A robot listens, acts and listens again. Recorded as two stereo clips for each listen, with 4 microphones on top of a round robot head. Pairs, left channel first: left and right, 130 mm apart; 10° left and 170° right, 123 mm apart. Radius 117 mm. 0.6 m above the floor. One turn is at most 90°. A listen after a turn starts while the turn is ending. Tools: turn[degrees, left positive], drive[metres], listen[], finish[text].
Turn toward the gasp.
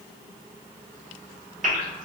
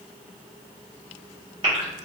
Thought: The gasp: 115° right.
Action: turn[-90]
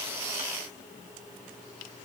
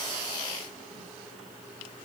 Thought: Nothing new. It was at 25° right.
Action: turn[-25]
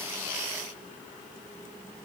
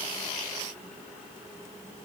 Action: finish[I heard a gasp from this way, but can't make it out now.]